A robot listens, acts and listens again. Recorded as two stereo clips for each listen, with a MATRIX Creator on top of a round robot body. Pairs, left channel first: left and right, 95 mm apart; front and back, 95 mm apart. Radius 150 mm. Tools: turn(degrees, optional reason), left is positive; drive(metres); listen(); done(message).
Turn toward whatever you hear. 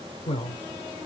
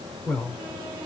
turn(degrees=80, reason="The man speaking: 80° left.")
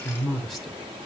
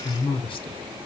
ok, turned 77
done("Found it: a man speaking, straight ahead, 1 to 2 m away.")